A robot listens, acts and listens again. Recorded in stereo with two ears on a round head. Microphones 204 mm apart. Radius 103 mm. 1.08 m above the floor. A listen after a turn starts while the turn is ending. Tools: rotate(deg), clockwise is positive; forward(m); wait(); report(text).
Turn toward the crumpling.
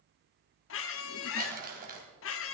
rotate(40)
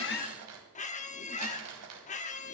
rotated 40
rotate(95)
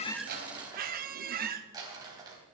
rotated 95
rotate(15)
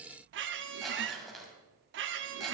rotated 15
report("Facing the crumpling, 2 to 4 m away.")